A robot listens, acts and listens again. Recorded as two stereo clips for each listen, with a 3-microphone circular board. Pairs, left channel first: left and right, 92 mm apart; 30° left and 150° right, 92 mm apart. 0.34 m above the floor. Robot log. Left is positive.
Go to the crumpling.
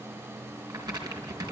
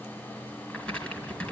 note: The crumpling: 45° right.
cmd yaw -45
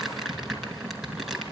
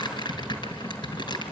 cmd fwd 1.0
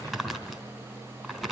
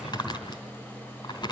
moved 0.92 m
cmd fwd 1.0
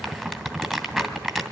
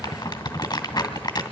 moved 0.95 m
cmd fwd 1.0
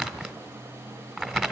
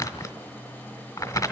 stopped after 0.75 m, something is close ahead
end: Arrived at the crumpling, straight ahead.